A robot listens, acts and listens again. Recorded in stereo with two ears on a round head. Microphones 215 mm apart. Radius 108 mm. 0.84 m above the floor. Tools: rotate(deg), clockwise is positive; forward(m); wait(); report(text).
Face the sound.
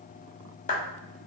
rotate(-30)
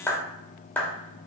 report("Found it: a clap, straight ahead.")